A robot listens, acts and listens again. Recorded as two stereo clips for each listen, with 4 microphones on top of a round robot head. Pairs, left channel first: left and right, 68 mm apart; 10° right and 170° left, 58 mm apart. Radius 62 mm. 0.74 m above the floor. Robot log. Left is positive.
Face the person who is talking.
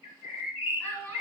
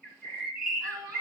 note: The child speaking: 150° left.
cmd yaw +150
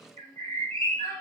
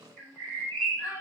note: The child speaking is now 35° right.
cmd yaw -35
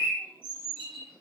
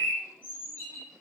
cmd idle
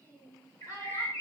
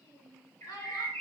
note: The child speaking is now 25° right.
cmd yaw -25
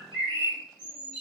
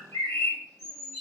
cmd idle
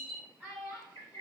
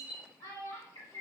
note: The child speaking is now 15° right.
cmd yaw -15
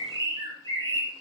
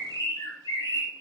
cmd idle
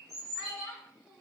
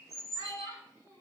end: Found it: a child speaking, straight ahead.